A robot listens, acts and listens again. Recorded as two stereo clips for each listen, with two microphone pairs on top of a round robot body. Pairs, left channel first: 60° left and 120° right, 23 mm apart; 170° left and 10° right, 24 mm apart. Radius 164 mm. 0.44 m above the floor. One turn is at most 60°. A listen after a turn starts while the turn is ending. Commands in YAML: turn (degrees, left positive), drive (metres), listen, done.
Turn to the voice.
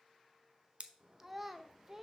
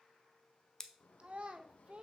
turn: -45
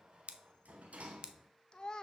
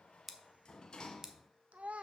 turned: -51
done: "Found it: a child speaking, straight ahead."